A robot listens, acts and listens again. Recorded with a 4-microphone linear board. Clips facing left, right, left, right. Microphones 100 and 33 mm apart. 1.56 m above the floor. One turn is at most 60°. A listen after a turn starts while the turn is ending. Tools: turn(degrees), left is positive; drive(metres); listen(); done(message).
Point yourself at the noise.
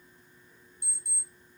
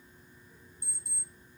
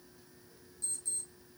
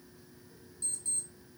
turn(degrees=-45)
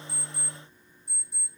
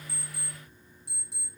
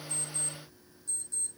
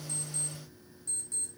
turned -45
turn(degrees=-60)
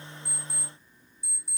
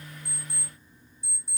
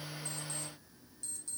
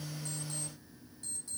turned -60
turn(degrees=-25)
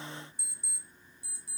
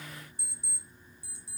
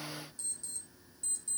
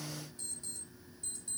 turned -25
turn(degrees=-25)
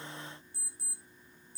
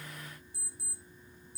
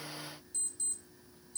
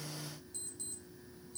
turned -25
done("Facing the alarm clock, over 4 m away.")